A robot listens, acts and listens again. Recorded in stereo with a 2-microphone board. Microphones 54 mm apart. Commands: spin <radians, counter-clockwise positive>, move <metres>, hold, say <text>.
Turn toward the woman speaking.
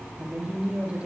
spin -0.44
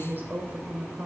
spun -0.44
spin -2.44
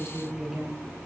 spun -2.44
say Facing the woman speaking, over 4 m away.